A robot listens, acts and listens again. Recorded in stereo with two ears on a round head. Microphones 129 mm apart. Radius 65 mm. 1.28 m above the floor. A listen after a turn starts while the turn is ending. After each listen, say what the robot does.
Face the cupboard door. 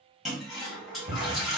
Turn 55° right.
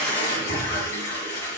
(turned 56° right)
Keep listening.
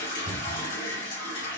Turn 65° right.
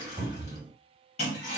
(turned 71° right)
Found it: a cupboard door, straight ahead, 1 to 2 m away.